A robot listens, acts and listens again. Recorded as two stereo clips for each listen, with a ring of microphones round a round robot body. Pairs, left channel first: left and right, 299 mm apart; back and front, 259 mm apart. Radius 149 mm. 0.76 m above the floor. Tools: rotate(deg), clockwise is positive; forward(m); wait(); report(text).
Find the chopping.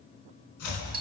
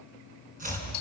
rotate(-60)
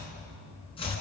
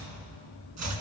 rotate(-15)
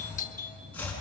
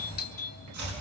report("Found it: chopping, straight ahead, over 4 m away.")